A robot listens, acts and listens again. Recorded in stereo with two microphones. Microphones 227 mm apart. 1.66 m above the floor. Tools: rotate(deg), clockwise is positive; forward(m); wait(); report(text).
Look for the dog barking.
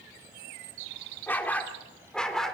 rotate(-30)
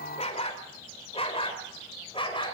rotate(-155)
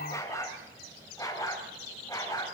rotate(-15)
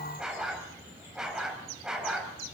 report("Found it: a dog barking, straight ahead.")